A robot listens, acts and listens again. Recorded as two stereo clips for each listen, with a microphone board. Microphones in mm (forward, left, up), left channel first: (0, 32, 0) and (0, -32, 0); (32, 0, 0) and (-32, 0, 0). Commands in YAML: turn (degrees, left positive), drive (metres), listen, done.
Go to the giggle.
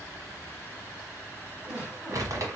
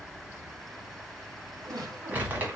turn: -170
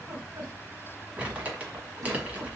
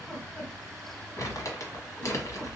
turn: -70
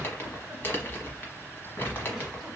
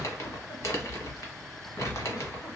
listen: true
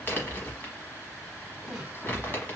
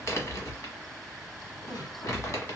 turn: -10
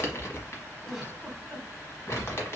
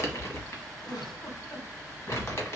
drive: 1.0
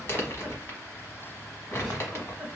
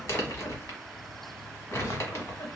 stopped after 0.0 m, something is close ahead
done: "Blocked. The giggle is further on, straight ahead."